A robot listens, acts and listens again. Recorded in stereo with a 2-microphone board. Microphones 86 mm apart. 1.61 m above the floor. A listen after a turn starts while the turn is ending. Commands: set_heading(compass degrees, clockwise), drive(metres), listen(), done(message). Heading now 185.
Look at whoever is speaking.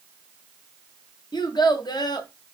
set_heading(130)
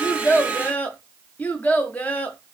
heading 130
set_heading(110)
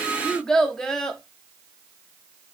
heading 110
done("Facing the child speaking, under 1 m away.")